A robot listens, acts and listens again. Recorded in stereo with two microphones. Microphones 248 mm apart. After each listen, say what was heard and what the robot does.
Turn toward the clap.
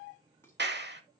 The clap: about 45° right or 135° right. Turn 45° right.
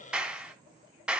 Facing the clap, 1 to 2 m away.